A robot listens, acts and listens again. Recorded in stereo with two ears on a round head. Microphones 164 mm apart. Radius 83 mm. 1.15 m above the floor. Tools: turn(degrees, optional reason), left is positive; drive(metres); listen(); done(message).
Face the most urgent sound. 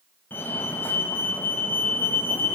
turn(degrees=30)
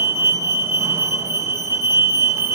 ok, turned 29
turn(degrees=-15, reason="So it is at 15° right.")
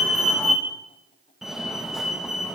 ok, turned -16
done("Facing the fire alarm.")